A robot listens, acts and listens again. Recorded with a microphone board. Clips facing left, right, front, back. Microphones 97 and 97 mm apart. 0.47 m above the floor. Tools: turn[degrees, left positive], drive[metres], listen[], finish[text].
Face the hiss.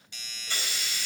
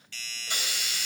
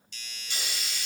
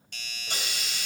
Thought: The hiss: 160° right.
Action: turn[-160]
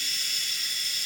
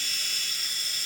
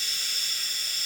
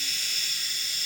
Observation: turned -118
Thought: The hiss is now 40° right.
Action: turn[-40]
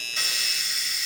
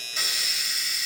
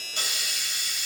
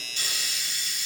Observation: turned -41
Action: finish[Facing the hiss, 2 to 4 m away.]